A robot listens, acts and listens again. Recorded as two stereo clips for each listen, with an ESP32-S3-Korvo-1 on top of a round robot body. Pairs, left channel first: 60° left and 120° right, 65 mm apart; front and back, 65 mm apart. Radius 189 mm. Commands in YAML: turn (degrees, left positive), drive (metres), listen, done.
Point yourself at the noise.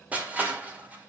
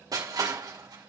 turn: 175
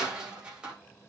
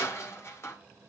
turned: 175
turn: -45
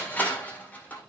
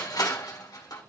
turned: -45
done: "Facing the crushing."